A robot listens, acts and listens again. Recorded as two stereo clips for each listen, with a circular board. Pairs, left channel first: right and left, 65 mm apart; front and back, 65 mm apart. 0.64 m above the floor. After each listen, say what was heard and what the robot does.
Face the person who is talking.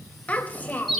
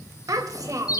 The child speaking: 155° right. Turn 155° right.
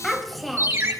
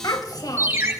Found it: a child speaking, straight ahead.